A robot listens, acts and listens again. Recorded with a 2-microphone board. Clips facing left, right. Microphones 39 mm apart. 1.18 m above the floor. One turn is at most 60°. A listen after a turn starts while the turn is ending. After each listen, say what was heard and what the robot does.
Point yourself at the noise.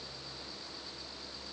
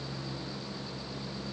Keep listening.
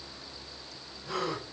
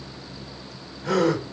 Turn 60° right.
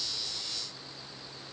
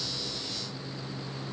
Nothing new. It was at 30° right. Turn 30° right.
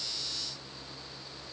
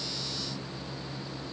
I heard a gasp from this way, but can't make it out now.